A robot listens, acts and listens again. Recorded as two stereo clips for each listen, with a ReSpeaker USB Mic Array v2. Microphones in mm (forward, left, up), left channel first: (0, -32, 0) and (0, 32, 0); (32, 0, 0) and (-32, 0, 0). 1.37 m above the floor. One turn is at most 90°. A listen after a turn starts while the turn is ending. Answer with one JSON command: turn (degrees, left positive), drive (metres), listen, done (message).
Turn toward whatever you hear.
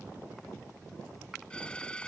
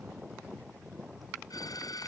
{"turn": -15}
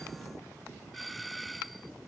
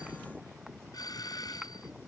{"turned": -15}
{"done": "Found it: a doorbell, straight ahead."}